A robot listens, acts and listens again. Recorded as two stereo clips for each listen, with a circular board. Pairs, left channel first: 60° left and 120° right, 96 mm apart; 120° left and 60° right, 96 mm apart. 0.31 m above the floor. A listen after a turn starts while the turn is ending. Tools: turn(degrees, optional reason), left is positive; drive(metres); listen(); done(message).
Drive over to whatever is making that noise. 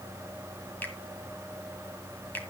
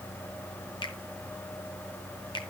turn(degrees=130, reason="The finger snap: 130° left.")
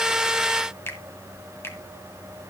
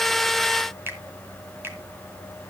drive(metres=1.0)
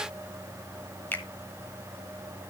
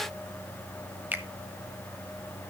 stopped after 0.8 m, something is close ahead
done("I am next to the finger snap.")